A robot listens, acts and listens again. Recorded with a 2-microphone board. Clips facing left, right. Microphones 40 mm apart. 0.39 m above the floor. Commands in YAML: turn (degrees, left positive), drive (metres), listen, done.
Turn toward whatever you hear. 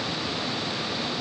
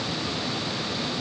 listen: true
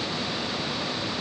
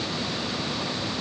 listen: true
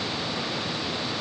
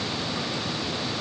done: "I can't make out anything to turn to."